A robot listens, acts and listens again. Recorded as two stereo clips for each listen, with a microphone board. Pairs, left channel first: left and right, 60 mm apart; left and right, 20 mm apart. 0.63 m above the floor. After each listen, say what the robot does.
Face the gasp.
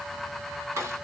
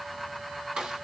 Keep listening.
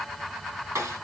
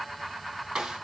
Keep listening.
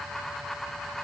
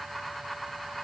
I can't make out a gasp to turn to.